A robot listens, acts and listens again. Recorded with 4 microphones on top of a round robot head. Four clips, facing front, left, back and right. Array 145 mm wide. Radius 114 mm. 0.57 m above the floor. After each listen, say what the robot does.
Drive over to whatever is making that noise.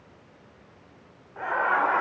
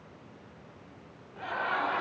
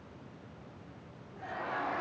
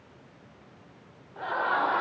Turn 25° right.
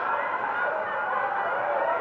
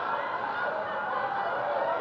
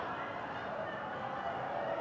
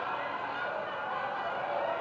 Turn 20° left.
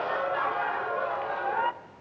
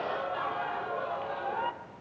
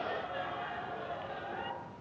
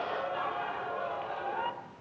Drive 1.0 m forward.
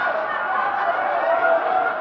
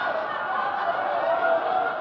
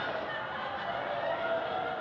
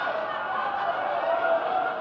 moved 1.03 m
Turn 10° left.
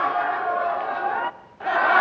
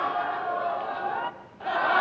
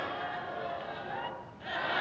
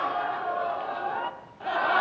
Drive 1.0 m forward.
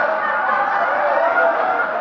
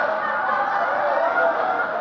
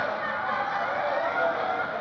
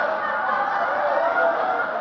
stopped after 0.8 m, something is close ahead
Arrived at the laughter, straight ahead.